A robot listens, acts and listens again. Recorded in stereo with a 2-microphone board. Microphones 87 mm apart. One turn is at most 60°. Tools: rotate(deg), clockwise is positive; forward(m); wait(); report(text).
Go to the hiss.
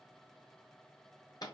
wait()
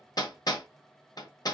wait()
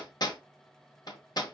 report("I can't make out a hiss, only hammering.")